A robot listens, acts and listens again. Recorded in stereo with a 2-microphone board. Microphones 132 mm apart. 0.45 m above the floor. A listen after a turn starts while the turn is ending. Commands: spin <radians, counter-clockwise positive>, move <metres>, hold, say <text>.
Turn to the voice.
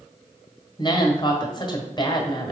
spin 0.61
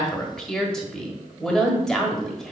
say Facing the woman speaking, 1 to 2 m away.